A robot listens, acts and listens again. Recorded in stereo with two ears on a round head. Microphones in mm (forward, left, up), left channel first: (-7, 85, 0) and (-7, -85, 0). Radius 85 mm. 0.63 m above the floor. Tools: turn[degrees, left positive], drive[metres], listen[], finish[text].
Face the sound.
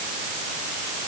Action: listen[]
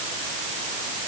Action: listen[]
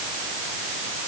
Action: finish[I can't make out anything.]